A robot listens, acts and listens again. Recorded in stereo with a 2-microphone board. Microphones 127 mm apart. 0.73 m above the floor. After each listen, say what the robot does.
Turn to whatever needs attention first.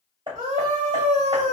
Turn 75° right.
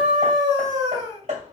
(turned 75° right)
Turn 30° right.
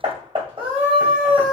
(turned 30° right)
Turn 10° right.
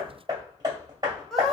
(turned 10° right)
Facing the scream, 2 to 4 m away.